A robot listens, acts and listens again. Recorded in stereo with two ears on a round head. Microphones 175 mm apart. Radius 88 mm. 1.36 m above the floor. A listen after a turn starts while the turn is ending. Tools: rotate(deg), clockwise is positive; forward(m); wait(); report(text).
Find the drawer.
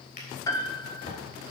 rotate(-45)
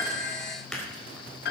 report("Facing the drawer.")